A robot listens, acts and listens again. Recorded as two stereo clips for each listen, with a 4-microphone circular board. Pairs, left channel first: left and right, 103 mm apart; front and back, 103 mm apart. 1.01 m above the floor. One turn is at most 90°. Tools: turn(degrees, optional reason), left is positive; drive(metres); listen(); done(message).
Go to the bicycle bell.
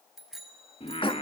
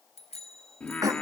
drive(metres=1.0)
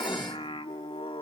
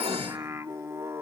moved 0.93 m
listen()
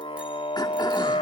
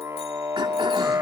listen()
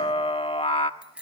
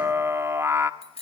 turn(degrees=-10, reason="The bicycle bell is now 10° right.")
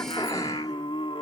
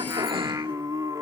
listen()
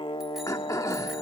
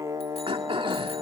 listen()
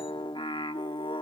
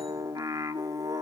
done("I heard a bicycle bell from this way, but can't make it out now. I did not reach it.")